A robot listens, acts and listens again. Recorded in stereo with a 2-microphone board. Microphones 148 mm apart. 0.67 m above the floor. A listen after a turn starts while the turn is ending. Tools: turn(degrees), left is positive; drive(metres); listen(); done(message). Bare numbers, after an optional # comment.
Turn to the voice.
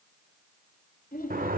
turn(90)
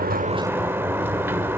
listen()
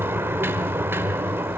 listen()
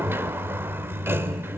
done("I heard a child speaking from this way, but can't make it out now.")